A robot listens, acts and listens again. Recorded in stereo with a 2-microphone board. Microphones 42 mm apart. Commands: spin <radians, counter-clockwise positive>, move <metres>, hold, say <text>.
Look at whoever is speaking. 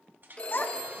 spin 0.87
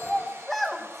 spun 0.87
say Found it: a child speaking, straight ahead.